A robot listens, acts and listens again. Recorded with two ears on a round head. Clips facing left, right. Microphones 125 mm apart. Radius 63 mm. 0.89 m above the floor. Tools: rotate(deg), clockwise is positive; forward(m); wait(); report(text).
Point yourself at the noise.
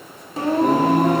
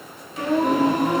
rotate(-45)
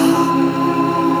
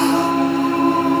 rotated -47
rotate(-60)
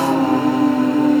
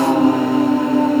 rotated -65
rotate(30)
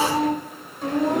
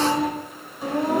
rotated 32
rotate(10)
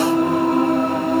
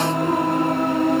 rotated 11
report("Found it: singing, straight ahead, 2 to 4 m away.")